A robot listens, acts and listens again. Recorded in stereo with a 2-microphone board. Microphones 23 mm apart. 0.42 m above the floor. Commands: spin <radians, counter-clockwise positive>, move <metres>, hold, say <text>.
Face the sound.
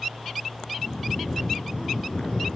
spin 1.05
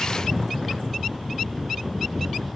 say Found it: snoring, straight ahead, 1 to 2 m away.